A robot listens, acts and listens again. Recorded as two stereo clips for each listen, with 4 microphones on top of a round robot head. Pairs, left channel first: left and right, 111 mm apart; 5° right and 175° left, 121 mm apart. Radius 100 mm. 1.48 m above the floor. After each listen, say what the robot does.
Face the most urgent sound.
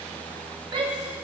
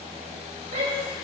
Turn 130° right.
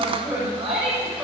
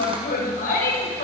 Facing the shout.